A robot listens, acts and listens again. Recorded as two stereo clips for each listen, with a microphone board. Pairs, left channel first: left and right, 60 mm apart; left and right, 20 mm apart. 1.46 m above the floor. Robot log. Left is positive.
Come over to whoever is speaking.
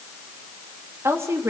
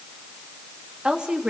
note: The woman speaking: about 55° right or 125° right.
cmd yaw -55
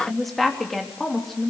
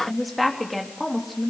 cmd fwd 1.0
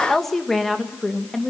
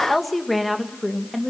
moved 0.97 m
cmd fwd 1.0
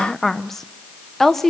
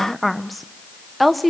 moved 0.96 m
cmd fwd 1.0
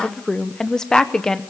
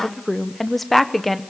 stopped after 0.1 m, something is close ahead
note: The woman speaking is now 10° left.
cmd yaw +10
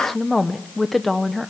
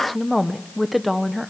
end: Arrived at the woman speaking, straight ahead.